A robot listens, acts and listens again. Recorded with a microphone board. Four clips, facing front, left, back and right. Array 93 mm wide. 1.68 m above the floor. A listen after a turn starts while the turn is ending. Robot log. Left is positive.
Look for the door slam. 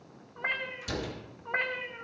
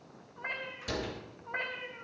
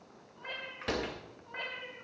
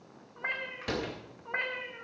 note: The door slam: 145° right.
cmd yaw -145
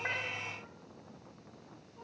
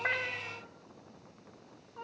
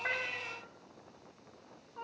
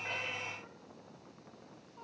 end: I heard a door slam from this way, but can't make it out now.